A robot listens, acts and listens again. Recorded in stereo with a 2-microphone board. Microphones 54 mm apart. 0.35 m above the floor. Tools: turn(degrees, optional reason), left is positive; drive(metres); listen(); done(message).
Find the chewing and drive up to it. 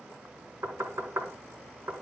listen()
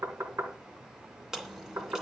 turn(degrees=-30)
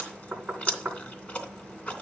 turn(degrees=25, reason="So it is at 25° left.")
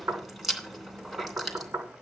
drive(metres=1.0)
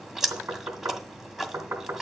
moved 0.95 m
drive(metres=1.0)
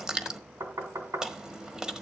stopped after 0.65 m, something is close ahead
turn(degrees=-15, reason="The chewing is now 15° right.")
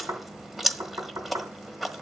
done("Arrived at the chewing, straight ahead.")